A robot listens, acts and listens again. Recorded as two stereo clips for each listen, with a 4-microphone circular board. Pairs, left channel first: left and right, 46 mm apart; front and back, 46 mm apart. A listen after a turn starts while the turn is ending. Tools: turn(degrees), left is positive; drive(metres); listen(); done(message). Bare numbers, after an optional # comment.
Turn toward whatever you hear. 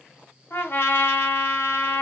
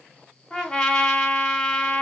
# The trumpet: 65° left.
turn(65)
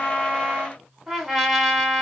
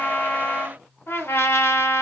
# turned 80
# The trumpet is now 15° right.
turn(-15)
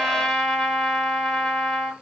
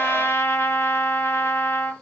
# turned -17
done("Facing the trumpet.")